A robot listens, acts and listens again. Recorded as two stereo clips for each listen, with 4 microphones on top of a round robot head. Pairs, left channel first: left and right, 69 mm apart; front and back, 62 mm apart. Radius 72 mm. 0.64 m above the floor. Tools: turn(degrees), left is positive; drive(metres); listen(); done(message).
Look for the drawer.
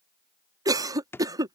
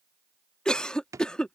turn(degrees=145)
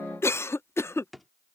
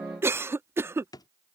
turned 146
done("Facing the drawer.")